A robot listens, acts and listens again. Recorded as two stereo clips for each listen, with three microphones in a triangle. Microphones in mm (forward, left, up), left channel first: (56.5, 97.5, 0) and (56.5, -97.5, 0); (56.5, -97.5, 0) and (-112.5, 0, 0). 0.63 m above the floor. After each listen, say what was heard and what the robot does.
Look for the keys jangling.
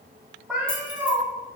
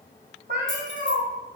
The keys jangling: 145° left. Turn 145° left.
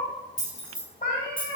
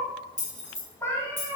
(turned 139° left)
The keys jangling is now 30° left. Turn 30° left.
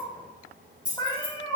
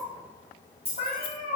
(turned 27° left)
Found it: keys jangling, straight ahead.